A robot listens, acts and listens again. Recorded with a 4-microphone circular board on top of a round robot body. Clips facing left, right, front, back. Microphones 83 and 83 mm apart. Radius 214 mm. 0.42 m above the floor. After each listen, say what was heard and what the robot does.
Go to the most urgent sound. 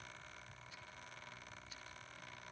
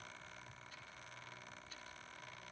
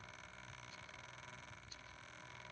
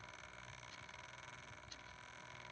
Keep listening.
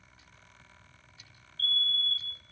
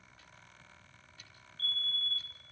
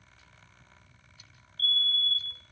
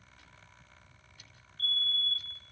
Drive 1.0 m forward.
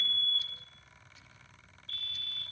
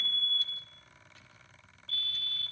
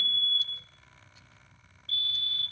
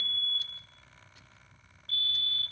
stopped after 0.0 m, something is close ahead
Blocked. The fire alarm is further on, straight ahead.